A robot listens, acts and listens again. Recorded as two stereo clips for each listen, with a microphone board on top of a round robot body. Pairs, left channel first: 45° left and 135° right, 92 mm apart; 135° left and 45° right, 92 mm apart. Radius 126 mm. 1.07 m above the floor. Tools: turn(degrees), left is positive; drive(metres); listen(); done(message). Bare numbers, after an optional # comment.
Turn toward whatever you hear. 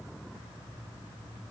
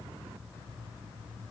listen()
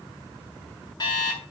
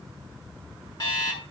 # The alarm clock: 90° left.
turn(90)
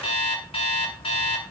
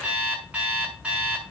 # The alarm clock is now 35° left.
turn(35)
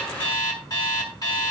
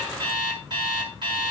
done("Facing the alarm clock, over 4 m away.")